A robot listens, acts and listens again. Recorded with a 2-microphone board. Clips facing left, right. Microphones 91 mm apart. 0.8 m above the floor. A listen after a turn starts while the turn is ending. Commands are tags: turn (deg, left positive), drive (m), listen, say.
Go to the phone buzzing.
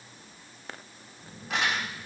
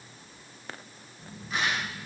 <turn deg="30"/>
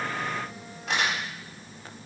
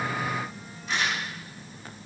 <turn deg="150"/>
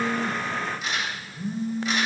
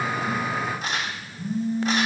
<turn deg="30"/>
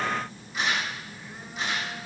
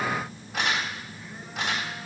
<turn deg="10"/>
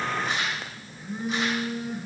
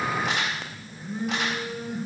<drive m="1.0"/>
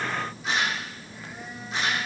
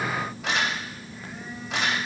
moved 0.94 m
<turn deg="10"/>
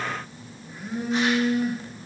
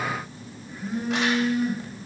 <drive m="1.0"/>
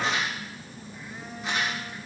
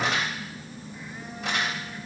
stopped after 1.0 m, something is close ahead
<say>Arrived at the phone buzzing, straight ahead.</say>